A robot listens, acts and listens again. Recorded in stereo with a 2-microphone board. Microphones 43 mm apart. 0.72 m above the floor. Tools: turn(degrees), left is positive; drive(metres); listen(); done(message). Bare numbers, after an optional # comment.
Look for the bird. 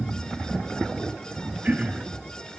listen()
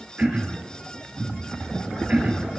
listen()
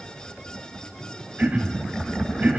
done("I can't make out a bird, only throat clearing.")